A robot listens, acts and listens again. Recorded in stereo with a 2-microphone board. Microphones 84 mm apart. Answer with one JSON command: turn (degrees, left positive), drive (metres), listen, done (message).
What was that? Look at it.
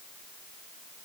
{"listen": true}
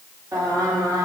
{"turn": -45}
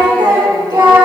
{"turn": -60}
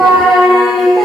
{"done": "Facing the singing."}